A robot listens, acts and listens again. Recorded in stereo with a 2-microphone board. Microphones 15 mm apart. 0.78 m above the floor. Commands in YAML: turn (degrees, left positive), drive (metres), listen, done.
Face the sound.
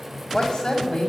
turn: 55
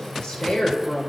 turn: 75
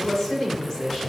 turn: 25
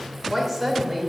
turn: 10
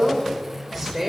done: "Found it: a woman speaking, straight ahead."